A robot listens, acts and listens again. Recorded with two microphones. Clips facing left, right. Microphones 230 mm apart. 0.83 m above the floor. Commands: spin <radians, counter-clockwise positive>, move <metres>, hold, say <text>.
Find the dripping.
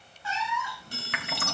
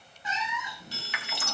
spin 1.05
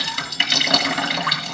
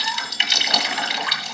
spin 1.05
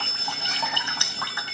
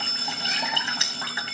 spin -0.35
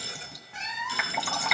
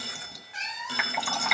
say Found it: dripping, straight ahead, 2 to 4 m away.